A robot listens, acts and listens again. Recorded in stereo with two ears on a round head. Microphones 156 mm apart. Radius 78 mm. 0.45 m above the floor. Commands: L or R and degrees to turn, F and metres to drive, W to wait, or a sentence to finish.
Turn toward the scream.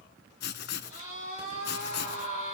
L40
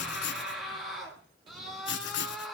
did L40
Facing the scream, over 4 m away.